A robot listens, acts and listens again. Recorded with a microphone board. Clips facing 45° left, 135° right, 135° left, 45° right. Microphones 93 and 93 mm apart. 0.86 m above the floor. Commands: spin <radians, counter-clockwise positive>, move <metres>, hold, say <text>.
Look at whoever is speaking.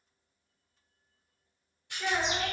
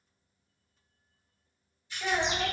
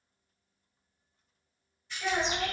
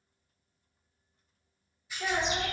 say Found it: a child speaking, straight ahead.